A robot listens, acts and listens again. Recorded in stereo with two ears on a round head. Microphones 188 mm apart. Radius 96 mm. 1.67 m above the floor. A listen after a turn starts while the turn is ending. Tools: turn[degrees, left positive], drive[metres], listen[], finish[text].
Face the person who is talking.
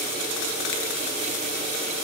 Action: listen[]
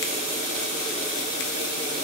Action: listen[]
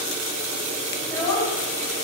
Action: turn[30]
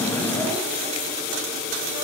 Action: listen[]
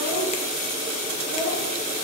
Action: listen[]
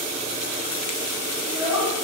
Thought: So it is at 20° right.
Action: turn[-20]
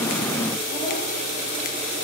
Action: listen[]
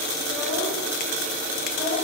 Action: finish[Found it: a child speaking, straight ahead, over 4 m away.]